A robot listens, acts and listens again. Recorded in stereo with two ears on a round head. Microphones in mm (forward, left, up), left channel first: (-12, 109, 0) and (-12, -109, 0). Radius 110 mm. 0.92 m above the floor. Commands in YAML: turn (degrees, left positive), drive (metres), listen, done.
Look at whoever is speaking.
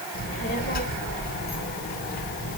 turn: 35
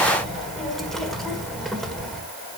done: "Found it: a child speaking, straight ahead."